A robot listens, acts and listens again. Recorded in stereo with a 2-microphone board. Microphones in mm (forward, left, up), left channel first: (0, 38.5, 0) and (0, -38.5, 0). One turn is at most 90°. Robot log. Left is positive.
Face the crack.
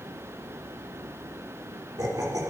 cmd idle
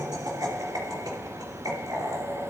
cmd idle
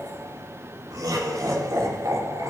end: I can't make out a crack, only laughter.